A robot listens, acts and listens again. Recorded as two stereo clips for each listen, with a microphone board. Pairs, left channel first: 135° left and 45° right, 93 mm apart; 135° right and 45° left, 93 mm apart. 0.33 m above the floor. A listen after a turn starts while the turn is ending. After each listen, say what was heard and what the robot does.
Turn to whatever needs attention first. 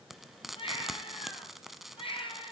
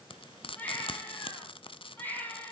The baby crying: 155° left. Turn 155° left.
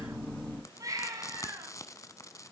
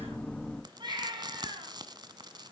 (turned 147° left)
Facing the baby crying.